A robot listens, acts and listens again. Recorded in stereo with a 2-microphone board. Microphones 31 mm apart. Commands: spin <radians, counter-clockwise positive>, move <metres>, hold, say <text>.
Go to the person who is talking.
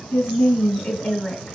spin 0.96
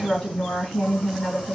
spin 0.79
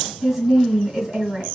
move 1.0
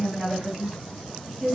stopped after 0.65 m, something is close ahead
spin -0.17
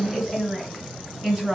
say Arrived at the woman speaking, straight ahead.